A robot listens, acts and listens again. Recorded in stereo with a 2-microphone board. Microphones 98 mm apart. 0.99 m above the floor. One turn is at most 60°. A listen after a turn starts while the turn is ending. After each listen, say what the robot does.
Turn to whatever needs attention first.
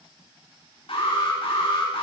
Turn 60° left.
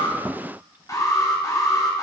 Turn 40° left.
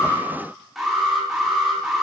Facing the alarm, over 4 m away.